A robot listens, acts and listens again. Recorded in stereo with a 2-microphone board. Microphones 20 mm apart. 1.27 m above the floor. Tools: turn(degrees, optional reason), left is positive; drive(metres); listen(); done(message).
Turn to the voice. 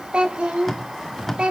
turn(degrees=-70, reason="The child speaking: about 70° right or 110° right.")
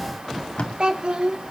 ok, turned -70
turn(degrees=-55, reason="So it is at 55° right.")
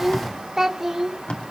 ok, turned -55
turn(degrees=-30, reason="The child speaking is now 30° right.")
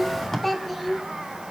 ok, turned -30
done("Found it: a child speaking, straight ahead, 2 to 4 m away.")